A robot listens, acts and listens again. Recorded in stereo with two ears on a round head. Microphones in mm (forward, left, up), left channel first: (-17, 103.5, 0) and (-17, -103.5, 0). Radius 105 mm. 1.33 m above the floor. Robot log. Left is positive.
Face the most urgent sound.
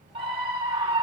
note: The scream: about 25° right or 155° right.
cmd yaw -25
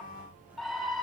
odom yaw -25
end: Found it: a scream, straight ahead, 2 to 4 m away.